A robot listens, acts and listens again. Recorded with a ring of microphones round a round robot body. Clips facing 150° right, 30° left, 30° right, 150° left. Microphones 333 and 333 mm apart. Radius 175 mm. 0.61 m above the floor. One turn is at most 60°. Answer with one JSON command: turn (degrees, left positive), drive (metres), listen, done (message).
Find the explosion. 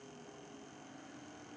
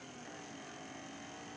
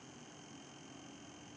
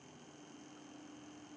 {"listen": true}
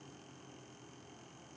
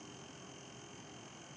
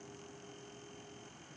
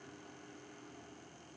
{"listen": true}
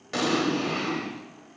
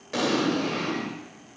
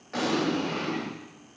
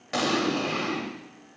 {"turn": 60}
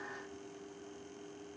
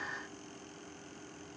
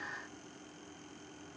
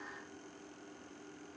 {"turn": 60}
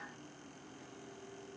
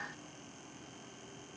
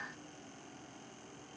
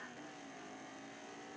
{"done": "Facing where the explosion came from. I can't hear it now."}